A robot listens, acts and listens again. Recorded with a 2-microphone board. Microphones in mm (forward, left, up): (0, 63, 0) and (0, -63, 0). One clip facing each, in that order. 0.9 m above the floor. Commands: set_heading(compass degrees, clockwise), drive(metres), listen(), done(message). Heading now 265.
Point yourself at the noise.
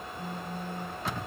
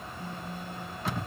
set_heading(220)
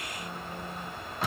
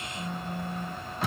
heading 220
set_heading(210)
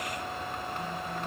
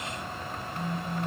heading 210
done("Found it: a phone buzzing, straight ahead, 1 to 2 m away.")